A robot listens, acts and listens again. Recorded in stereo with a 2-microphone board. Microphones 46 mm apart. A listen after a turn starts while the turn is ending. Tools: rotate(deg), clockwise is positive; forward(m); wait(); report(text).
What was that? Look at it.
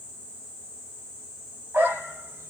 rotate(65)
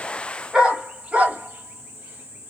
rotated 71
rotate(35)
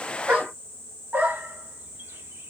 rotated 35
rotate(40)
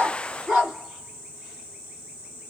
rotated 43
rotate(10)
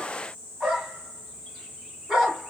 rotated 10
report("Facing the dog barking.")